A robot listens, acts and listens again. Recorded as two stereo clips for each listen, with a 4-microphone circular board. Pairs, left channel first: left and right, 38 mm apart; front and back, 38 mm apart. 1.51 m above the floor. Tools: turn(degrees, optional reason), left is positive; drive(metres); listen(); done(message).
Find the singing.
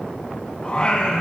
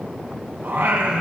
turn(degrees=155, reason="The singing: 155° left.")
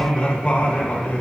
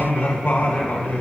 turn(degrees=45, reason="The singing is now 45° left.")
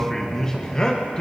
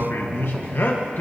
turn(degrees=30, reason="The singing is now 30° left.")
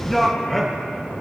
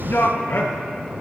turn(degrees=10, reason="The singing is now 10° left.")
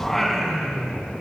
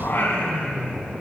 turn(degrees=15, reason="The singing is now 15° left.")
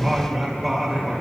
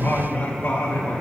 done("Found it: singing, straight ahead.")